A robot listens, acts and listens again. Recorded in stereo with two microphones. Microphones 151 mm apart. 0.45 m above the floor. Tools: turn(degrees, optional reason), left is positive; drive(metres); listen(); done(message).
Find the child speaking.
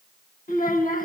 turn(degrees=90)
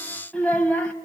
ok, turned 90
turn(degrees=10, reason="So it is at 10° left.")
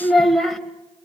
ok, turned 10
done("Found it: a child speaking, straight ahead, 1 to 2 m away.")